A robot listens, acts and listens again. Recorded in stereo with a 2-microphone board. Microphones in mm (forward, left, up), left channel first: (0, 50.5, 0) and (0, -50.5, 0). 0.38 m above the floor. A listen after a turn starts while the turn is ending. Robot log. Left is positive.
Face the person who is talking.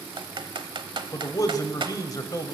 note: The man speaking: about 40° left or 140° left.
cmd yaw +40
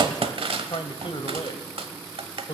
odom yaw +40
note: So it is at 90° left.
cmd yaw +90
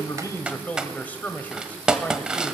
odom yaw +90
note: The man speaking is now 20° left.
cmd yaw +20
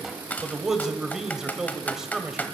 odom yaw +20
end: Found it: a man speaking, straight ahead.